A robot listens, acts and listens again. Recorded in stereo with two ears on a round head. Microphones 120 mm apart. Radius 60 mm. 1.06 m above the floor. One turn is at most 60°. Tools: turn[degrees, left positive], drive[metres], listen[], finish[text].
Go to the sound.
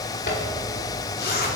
Action: turn[60]
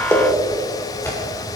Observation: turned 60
Thought: So it is at 15° left.
Action: turn[15]
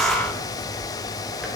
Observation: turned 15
Action: listen[]
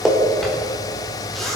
Action: drive[1.0]
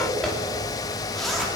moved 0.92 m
Action: drive[1.0]
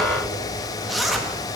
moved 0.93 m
Action: drive[1.0]
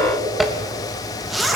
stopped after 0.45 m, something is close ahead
Action: finish[Arrived at the zipper, straight ahead.]